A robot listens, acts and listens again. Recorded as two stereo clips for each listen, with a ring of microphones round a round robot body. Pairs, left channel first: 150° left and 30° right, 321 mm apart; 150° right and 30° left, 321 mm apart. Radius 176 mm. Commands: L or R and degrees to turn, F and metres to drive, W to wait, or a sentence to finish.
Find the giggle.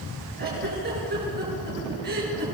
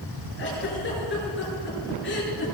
R90
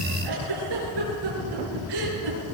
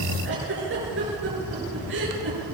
R25
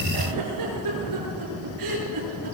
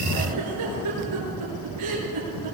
Facing the giggle, over 4 m away.